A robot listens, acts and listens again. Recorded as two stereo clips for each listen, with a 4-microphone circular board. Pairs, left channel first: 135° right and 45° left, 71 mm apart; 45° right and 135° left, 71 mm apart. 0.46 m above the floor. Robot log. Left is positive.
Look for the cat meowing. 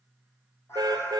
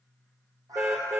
note: The cat meowing: 170° left.
cmd yaw +170
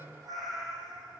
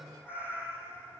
note: The cat meowing is now 15° left.
cmd yaw +15
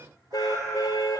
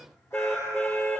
cmd idle
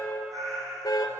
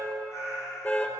end: Found it: a cat meowing, straight ahead.